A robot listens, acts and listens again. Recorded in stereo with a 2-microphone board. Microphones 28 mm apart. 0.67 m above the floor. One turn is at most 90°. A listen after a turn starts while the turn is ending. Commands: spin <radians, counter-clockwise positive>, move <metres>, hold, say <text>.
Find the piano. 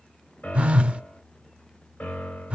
spin 1.22
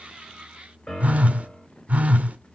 spin 0.52
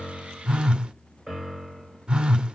say Found it: a piano, straight ahead.